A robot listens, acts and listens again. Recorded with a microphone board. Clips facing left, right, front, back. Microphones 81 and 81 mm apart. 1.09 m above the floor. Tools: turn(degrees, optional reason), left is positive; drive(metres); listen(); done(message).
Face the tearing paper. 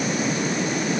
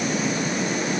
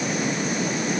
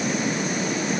listen()
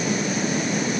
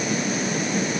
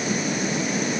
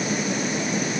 listen()
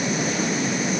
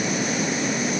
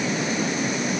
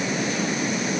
done("I can't make out tearing paper to turn to.")